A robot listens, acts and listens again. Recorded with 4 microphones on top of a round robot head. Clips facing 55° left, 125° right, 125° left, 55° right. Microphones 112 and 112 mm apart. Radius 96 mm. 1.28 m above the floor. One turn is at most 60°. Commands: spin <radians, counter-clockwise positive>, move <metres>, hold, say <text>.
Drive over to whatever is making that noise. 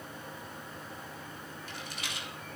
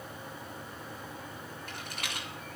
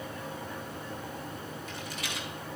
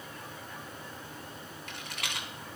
spin -1.05
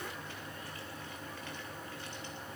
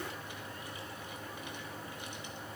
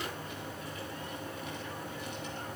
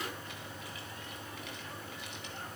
spin -0.44
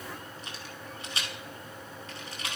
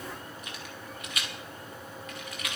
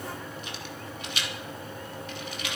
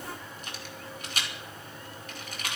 move 1.0
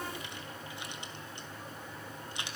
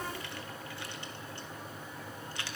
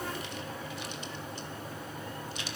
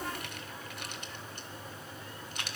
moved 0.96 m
hold
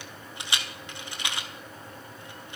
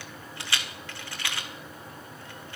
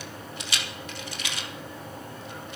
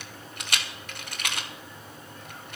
spin -0.26
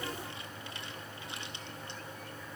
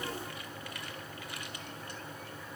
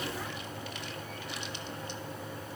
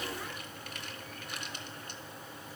hold
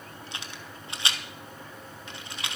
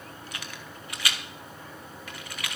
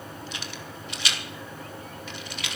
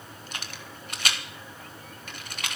spin -0.17
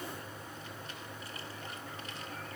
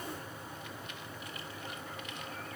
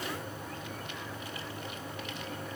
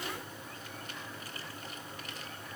hold
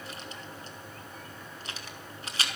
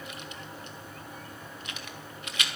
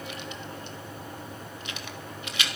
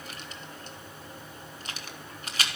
move 1.0
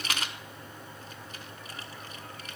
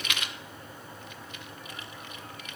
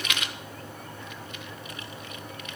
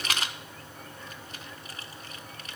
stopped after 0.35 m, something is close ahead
say Arrived at the rattle, straight ahead.